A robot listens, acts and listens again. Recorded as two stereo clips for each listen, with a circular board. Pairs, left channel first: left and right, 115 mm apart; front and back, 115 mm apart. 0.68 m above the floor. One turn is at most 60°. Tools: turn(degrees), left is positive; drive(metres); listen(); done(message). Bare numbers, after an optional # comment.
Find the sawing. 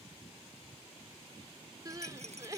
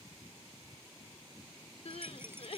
listen()
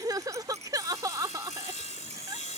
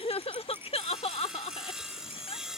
# The sawing: 95° left.
turn(60)
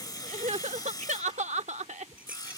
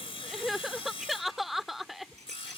# The sawing is now 35° left.
turn(35)
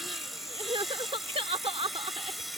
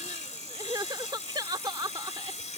done("Found it: sawing, straight ahead.")